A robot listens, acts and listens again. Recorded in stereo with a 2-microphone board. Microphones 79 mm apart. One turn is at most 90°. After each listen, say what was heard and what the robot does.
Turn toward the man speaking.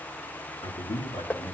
Turn 90° left.
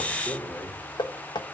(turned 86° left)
Found it: a man speaking, straight ahead, 2 to 4 m away.